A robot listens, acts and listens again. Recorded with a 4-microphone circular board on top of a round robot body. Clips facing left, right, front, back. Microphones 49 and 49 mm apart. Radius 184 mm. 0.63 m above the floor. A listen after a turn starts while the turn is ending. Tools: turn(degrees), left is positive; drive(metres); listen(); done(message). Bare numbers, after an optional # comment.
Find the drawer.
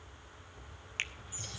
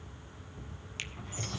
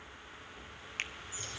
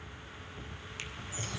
# The drawer: 120° right.
turn(-120)
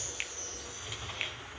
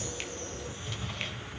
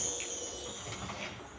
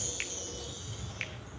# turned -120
# The drawer is now 10° left.
turn(10)
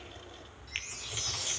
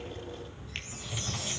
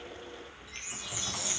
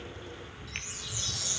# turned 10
listen()
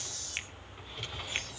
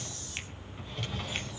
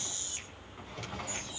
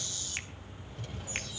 done("Facing the drawer, 2 to 4 m away.")